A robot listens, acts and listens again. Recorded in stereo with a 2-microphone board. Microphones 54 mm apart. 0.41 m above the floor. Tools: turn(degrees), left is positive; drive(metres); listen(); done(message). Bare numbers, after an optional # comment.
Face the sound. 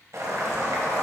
# The boiling: about 60° right or 120° right.
turn(-60)
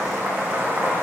# So it is at 35° right.
turn(-35)
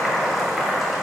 done("Facing the boiling, 1 to 2 m away.")